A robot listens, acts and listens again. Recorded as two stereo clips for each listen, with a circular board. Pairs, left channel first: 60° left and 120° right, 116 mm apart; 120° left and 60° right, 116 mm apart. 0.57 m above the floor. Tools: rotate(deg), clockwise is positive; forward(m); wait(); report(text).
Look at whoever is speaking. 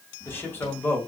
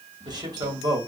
rotate(10)
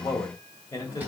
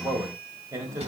report("Facing the man speaking, 2 to 4 m away.")